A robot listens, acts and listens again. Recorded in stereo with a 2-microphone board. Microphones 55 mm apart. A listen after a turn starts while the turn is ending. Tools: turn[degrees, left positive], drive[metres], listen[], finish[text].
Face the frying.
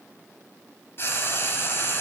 Thought: The frying: about 45° left or 135° left.
Action: turn[45]
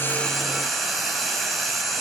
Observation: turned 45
Action: finish[Facing the frying.]